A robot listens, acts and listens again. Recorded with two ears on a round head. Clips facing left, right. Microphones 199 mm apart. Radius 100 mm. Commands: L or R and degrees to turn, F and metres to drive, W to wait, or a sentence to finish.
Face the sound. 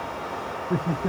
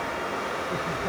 L50
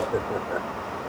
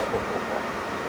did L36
W
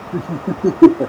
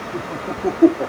L35
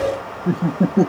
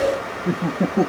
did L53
L10
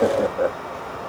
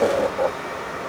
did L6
L20
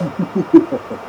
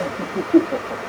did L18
L30
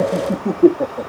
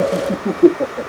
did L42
Facing the laughter.